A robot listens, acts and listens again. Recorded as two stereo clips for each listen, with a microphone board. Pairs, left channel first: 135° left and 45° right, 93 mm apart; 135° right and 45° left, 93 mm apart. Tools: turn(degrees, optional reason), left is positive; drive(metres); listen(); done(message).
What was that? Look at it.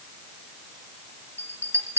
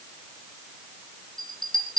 turn(degrees=-105, reason="The bell: 105° right.")
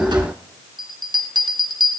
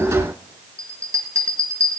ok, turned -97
turn(degrees=-10, reason="The bell is now 10° right.")
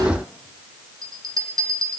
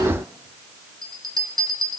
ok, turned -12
done("Facing the bell.")